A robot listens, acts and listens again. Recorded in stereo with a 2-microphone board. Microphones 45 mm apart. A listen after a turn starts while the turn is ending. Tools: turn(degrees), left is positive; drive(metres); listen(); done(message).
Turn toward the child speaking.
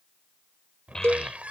turn(degrees=30)
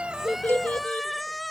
turn(degrees=145)
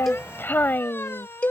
turn(degrees=50)
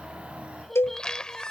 done("Facing the child speaking.")